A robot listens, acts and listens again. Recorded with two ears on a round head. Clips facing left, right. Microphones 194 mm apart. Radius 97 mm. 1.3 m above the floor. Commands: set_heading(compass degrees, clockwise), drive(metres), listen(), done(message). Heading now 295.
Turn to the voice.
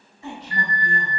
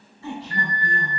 set_heading(275)
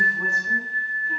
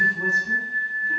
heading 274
done("Facing the woman speaking.")